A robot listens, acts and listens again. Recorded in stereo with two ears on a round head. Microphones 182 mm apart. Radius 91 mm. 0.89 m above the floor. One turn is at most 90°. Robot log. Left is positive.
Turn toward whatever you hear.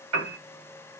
note: The piano: about 65° right or 115° right.
cmd yaw -65
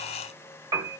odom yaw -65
note: So it is at 20° right.
cmd yaw -20
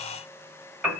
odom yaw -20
end: Facing the piano.